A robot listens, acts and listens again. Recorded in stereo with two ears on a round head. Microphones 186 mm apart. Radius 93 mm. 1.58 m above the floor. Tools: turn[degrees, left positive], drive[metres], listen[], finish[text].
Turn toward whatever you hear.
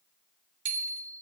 Thought: The bicycle bell: about 60° right or 120° right.
Action: turn[-60]
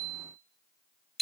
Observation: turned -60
Action: finish[Found it: a bicycle bell, straight ahead, 2 to 4 m away.]